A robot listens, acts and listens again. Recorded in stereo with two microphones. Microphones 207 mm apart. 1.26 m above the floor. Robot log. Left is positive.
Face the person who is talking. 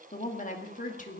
note: The woman speaking: about 40° left or 140° left.
cmd yaw +40
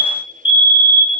cmd idle
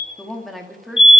end: Facing the woman speaking.